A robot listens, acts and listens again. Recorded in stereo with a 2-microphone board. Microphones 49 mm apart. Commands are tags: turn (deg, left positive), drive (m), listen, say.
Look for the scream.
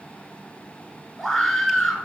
<turn deg="30"/>
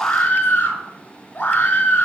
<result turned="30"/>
<turn deg="145"/>
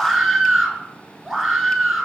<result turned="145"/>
<say>Facing the scream.</say>